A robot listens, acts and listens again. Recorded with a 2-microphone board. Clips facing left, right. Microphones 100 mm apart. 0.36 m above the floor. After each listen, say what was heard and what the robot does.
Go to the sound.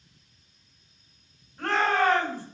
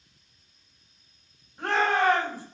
Turn 30° right.
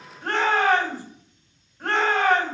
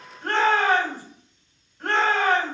So it is at 15° left. Turn 15° left.
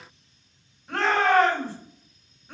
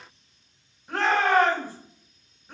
Drive 1.0 m forward.
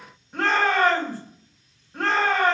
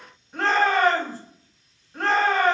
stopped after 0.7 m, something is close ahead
Arrived at the shout, straight ahead.